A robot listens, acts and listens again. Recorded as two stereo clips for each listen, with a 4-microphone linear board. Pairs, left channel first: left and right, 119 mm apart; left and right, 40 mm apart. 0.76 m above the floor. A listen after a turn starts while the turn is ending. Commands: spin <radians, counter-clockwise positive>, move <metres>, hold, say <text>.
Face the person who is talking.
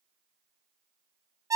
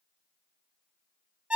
hold
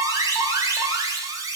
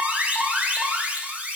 hold
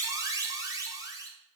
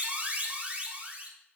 say I can't make out anyone speaking, only an alarm.